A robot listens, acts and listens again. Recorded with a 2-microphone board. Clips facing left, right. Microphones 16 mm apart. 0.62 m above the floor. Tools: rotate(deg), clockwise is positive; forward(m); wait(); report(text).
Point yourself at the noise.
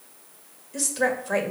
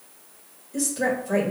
rotate(-25)
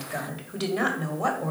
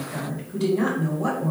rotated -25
rotate(-125)
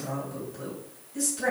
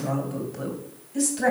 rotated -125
rotate(25)
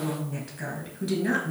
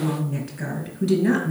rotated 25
report("Found it: a woman speaking, straight ahead.")